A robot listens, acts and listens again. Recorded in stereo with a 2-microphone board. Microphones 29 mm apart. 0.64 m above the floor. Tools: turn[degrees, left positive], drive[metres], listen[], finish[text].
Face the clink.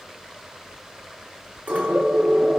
Thought: The clink: about 65° right or 115° right.
Action: turn[-65]
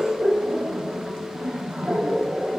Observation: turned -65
Action: listen[]
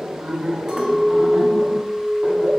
Thought: So it is at 20° right.
Action: turn[-20]
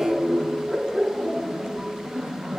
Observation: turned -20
Action: listen[]
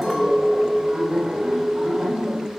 Action: finish[Facing the clink, 1 to 2 m away.]